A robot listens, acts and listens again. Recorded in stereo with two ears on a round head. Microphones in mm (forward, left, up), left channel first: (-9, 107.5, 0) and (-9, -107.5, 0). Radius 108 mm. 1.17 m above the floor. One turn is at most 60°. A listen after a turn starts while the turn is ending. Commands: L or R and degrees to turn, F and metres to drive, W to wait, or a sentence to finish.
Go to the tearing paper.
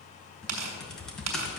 R60
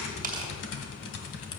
W
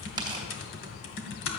W
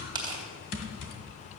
R20
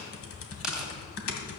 W
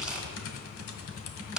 W
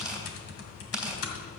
F1.0
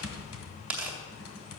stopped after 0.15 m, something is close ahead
Something is in my way. I am facing the tearing paper but have not reached it.